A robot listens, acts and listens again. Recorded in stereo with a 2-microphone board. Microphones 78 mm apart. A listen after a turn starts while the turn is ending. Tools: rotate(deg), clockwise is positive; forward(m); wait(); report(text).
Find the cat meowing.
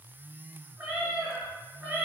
rotate(15)
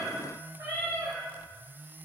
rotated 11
rotate(25)
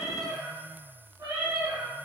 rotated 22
rotate(135)
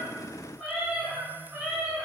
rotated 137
report("Facing the cat meowing.")